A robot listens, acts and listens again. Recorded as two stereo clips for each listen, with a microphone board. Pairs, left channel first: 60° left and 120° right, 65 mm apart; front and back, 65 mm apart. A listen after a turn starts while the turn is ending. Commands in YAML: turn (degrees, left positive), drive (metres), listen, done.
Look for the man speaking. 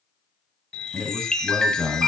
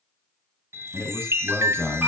turn: -55
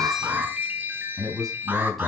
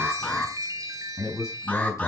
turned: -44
turn: -30
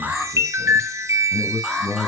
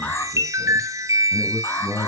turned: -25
turn: -20
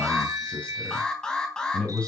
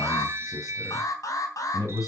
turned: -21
turn: -10
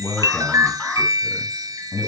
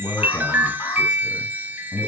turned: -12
done: "Facing the man speaking, 2 to 4 m away."